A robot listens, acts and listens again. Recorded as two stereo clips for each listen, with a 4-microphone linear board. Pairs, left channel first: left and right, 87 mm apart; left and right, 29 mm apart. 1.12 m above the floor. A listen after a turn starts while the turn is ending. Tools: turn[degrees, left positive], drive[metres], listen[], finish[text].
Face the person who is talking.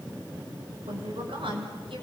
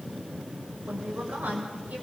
Action: turn[-90]
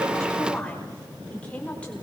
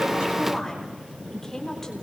Thought: So it is at 15° left.
Action: turn[15]
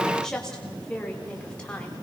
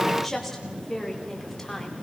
Thought: The woman speaking is now 15° left.
Action: turn[15]
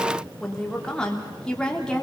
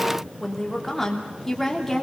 Thought: The woman speaking is now 10° left.
Action: turn[10]
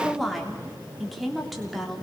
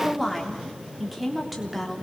Action: finish[Facing the woman speaking, 2 to 4 m away.]